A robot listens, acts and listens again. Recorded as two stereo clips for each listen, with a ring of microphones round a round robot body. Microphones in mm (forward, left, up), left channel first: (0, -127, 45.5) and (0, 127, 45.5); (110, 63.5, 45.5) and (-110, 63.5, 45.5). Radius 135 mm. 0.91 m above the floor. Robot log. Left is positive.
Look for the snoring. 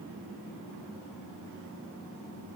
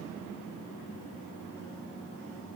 cmd idle
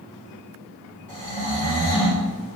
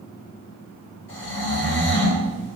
note: The snoring: 30° left.
cmd yaw +30
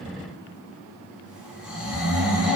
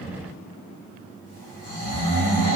end: Found it: snoring, straight ahead.